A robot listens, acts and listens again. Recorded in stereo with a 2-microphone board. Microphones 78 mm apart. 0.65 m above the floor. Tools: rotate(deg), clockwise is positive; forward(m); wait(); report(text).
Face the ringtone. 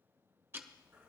wait()
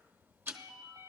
rotate(90)
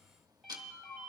report("Facing the ringtone, 2 to 4 m away.")